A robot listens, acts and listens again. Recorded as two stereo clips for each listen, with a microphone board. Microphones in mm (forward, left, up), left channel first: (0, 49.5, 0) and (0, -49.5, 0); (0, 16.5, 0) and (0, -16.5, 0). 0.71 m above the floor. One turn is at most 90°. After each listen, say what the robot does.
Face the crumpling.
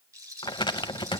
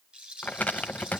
Turn 55° left.
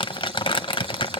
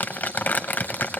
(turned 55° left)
Turn 65° left.
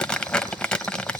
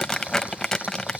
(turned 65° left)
Turn 10° left.
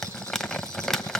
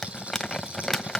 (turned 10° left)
Found it: crumpling, straight ahead, under 1 m away.